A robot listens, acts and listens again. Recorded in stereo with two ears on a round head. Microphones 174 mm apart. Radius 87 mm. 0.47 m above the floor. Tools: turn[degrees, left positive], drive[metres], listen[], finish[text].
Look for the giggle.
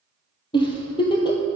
Thought: The giggle: about 25° left or 155° left.
Action: turn[25]
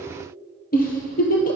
Thought: So it is at 130° left.
Action: turn[130]
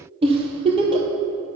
Thought: The giggle is now 30° right.
Action: turn[-30]
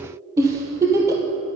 Thought: The giggle is now 15° right.
Action: turn[-15]
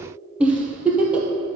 Action: finish[Facing the giggle, 1 to 2 m away.]